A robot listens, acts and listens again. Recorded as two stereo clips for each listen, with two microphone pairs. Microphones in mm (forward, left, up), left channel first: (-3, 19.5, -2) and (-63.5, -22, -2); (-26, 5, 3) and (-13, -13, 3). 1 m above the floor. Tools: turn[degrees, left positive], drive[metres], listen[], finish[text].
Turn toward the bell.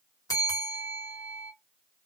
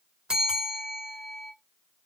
Action: finish[Found it: a bell, straight ahead.]